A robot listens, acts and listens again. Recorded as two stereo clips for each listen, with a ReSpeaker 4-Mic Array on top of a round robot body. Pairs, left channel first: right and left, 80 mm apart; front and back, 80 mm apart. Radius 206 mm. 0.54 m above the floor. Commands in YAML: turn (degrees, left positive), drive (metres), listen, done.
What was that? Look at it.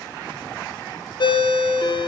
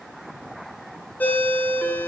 turn: -70
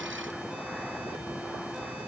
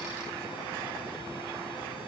listen: true
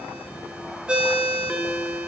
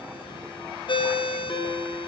turn: 10
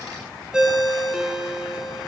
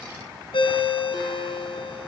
turn: 10
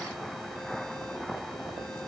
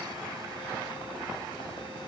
listen: true
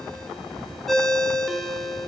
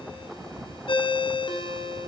done: "Found it: a ringtone, straight ahead, 1 to 2 m away."